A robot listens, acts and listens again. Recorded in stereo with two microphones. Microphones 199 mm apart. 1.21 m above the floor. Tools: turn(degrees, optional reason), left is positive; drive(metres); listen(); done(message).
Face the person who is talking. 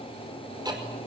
listen()
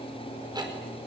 listen()
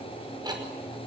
done("I can't make out anyone speaking, only ticking.")